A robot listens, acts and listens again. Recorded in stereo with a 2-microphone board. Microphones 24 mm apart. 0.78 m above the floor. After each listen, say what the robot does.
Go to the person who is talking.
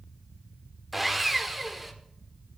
Keep listening.
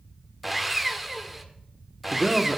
Turn 15° right.
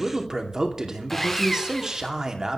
Turn 150° right.
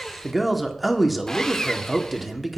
Drive 1.0 m forward.
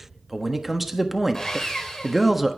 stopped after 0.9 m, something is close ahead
Turn 10° right.
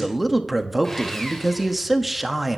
I am next to the man speaking.